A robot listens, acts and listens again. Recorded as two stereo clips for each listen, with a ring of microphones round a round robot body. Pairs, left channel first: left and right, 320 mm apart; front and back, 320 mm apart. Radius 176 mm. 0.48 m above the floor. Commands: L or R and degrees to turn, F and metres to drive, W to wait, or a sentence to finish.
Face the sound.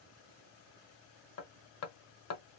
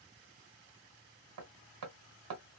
L135
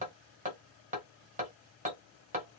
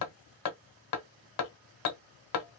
R20
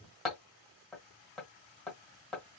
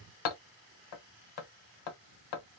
Found it: hammering, straight ahead.